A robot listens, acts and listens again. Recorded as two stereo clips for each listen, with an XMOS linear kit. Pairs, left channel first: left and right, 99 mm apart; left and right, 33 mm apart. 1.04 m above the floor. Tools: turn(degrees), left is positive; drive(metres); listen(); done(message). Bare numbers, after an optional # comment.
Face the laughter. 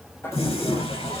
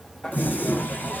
# The laughter: about 25° left or 155° left.
turn(25)
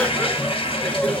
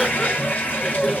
turn(30)
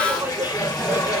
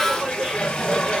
# So it is at 15° right.
turn(-15)
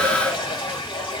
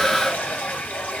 listen()
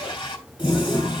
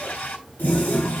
listen()
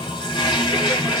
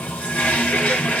done("Facing where the laughter came from. I can't hear it now.")